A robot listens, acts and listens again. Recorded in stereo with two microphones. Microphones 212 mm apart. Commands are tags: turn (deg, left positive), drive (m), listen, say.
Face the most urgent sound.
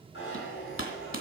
<listen/>
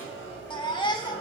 <turn deg="20"/>
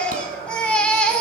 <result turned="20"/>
<say>Found it: a baby crying, straight ahead.</say>